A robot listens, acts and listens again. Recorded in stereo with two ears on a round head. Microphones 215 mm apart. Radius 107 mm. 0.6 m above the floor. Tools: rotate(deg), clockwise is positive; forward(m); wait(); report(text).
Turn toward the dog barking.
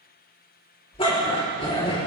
rotate(-25)
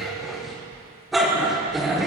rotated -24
report("Found it: a dog barking, straight ahead, 2 to 4 m away.")